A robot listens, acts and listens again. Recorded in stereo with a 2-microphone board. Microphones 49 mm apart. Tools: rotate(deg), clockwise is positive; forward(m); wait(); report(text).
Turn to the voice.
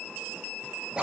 wait()
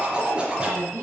rotate(65)
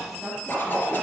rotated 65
wait()
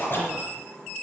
wait()
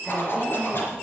report("I heard a woman speaking, but can't make it out now. It was about straight ahead or 50° right.")